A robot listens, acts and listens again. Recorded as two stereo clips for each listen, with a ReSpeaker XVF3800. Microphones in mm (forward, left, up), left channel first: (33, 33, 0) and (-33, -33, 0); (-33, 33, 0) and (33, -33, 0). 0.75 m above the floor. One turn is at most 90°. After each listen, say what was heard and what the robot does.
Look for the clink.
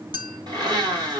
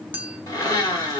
The clink: 115° right. Turn 90° right.
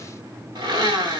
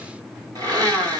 Nothing new. It was at 25° right. Turn 25° right.
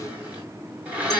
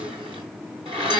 Keep listening.
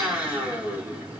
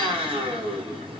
I heard a clink from this way, but can't make it out now.